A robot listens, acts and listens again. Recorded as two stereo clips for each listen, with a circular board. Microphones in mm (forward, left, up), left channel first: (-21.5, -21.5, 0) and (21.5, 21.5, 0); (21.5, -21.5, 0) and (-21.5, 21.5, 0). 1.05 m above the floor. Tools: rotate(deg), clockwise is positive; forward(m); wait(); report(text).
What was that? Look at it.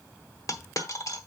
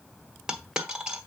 rotate(150)
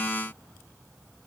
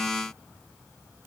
report("I heard a dropped coin from this way, but can't make it out now.")